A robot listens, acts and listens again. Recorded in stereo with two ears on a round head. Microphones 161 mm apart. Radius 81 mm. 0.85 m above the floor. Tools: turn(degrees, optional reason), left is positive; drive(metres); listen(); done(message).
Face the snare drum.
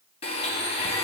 listen()
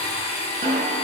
turn(degrees=-35, reason="The snare drum: about 35° right or 145° right.")
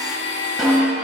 done("Found it: a snare drum, straight ahead.")